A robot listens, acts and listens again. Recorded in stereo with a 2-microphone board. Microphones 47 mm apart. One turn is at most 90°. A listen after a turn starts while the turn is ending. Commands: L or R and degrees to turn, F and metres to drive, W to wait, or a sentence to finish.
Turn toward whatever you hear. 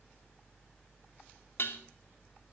L55
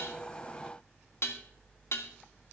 L65
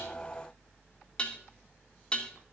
L20
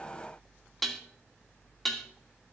Facing the dishes clattering, 2 to 4 m away.